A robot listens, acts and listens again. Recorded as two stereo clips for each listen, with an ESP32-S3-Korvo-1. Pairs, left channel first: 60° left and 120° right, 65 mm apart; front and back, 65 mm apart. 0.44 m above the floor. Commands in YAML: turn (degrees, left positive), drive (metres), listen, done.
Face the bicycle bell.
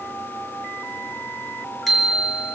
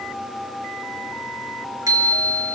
turn: 150
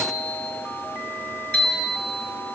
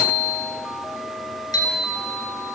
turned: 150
turn: -10
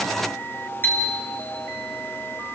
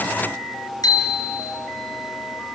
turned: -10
done: "Facing the bicycle bell, over 4 m away."